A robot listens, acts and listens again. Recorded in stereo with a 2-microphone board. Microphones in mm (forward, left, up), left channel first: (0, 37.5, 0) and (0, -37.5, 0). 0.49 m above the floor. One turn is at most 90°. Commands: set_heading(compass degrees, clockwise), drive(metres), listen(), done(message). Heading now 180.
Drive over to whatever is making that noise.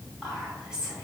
set_heading(210)
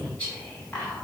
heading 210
set_heading(195)
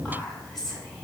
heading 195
drive(1.0)
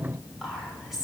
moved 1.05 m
drive(1.0)
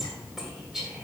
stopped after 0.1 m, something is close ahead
set_heading(205)
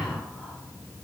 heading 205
listen()
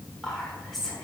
done("Arrived at the whispering, straight ahead.")